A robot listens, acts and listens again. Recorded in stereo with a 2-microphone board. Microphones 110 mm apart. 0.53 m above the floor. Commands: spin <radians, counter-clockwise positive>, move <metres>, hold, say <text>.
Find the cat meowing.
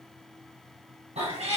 spin -1.57
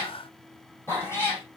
spin 0.44
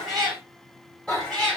spin 0.17
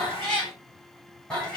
say Found it: a cat meowing, straight ahead, over 4 m away.